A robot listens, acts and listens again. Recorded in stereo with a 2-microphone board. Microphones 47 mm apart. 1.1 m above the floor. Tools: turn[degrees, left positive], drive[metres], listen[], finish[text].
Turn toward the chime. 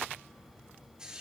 Action: listen[]
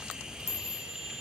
Action: turn[90]
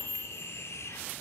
Action: finish[Found it: a chime, straight ahead.]